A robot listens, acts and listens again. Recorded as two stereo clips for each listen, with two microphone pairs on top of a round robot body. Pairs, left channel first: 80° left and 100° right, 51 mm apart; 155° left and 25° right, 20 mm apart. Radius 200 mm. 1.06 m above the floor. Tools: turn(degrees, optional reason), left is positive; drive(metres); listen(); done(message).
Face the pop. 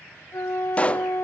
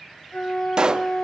turn(degrees=15, reason="The pop: 15° left.")
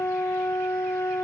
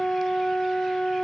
done("I heard a pop from this way, but can't make it out now.")